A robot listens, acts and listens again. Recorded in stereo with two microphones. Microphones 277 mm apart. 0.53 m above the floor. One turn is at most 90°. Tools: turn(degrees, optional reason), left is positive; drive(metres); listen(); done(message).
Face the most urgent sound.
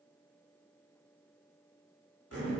listen()
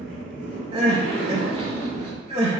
turn(degrees=-20, reason="The crying: about 20° right or 160° right.")
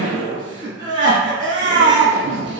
turn(degrees=-90, reason="So it is at 135° right.")
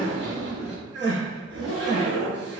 turn(degrees=-40, reason="The crying is now 40° right.")
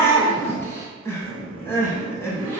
turn(degrees=10, reason="The crying is now 10° left.")
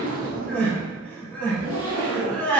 done("Facing the crying.")